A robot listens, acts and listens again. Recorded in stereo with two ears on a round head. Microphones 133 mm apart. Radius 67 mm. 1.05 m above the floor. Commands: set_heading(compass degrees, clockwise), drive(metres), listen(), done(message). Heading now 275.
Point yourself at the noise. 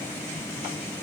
listen()
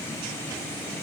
listen()
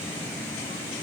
done("I can't make out anything to turn to.")